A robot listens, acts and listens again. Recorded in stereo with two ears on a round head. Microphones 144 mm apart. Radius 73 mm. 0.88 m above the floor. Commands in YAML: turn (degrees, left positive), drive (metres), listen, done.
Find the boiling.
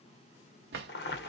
turn: 65
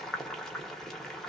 done: "Found it: boiling, straight ahead, under 1 m away."